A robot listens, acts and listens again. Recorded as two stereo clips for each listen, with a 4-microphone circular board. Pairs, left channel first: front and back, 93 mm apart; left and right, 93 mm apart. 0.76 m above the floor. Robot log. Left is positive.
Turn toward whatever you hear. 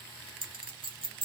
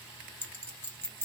note: The clink: 160° left.
cmd yaw +160
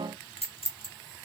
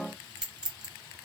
note: The clink is now 10° right.
cmd yaw -10
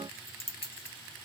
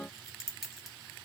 end: Found it: a clink, straight ahead, 1 to 2 m away.